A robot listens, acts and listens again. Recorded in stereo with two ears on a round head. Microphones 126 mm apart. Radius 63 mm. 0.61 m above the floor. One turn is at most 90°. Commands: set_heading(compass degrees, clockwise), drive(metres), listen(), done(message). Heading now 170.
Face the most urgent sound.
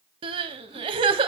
set_heading(210)
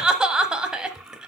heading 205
done("Found it: crying, straight ahead, 1 to 2 m away.")